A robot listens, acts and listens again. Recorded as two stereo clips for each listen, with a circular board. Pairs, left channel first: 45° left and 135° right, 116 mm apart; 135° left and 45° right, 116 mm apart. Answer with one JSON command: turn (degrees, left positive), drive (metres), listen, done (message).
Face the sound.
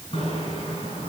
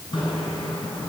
{"turn": 85}
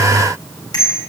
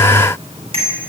{"turn": -10}
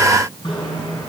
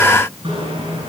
{"done": "Facing the bicycle bell."}